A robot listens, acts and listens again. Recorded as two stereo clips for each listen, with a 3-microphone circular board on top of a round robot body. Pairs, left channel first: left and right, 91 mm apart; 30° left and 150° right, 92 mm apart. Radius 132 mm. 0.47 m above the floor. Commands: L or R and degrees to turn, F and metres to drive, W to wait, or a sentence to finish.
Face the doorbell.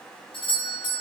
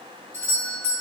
L90
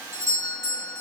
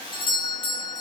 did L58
L35
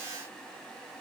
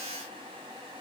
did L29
W
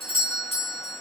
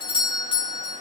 Found it: a doorbell, straight ahead, over 4 m away.